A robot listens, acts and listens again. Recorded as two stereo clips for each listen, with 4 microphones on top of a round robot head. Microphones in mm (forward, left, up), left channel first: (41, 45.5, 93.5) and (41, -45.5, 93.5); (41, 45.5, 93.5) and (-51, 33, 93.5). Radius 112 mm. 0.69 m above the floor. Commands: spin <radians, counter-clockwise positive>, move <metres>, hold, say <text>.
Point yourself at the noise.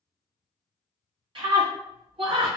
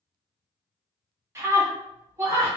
spin -2.01
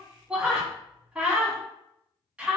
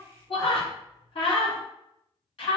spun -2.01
spin -0.26
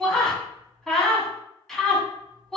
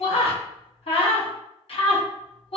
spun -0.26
say Facing the scream.